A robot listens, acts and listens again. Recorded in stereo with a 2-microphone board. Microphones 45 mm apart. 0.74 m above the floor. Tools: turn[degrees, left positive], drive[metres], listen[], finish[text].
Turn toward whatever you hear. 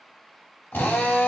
Thought: The drill: about 60° left or 120° left.
Action: turn[60]
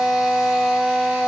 Action: finish[Found it: a drill, straight ahead, 1 to 2 m away.]